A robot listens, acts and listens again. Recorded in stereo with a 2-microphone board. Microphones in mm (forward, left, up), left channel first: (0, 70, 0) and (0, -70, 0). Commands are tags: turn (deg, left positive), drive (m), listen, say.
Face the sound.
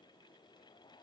<listen/>
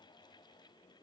<listen/>
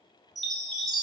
<turn deg="30"/>
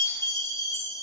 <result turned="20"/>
<turn deg="160"/>
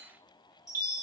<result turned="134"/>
<turn deg="25"/>
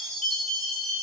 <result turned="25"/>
<say>Facing the chime.</say>